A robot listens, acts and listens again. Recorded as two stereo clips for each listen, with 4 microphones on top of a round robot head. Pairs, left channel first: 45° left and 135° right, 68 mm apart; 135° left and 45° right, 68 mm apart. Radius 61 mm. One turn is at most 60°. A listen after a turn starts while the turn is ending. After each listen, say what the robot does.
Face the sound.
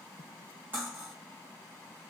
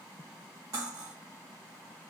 Turn 60° right.
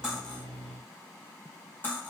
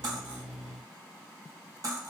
Turn 15° right.
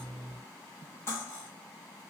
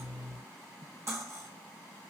Facing the cutlery clinking, 1 to 2 m away.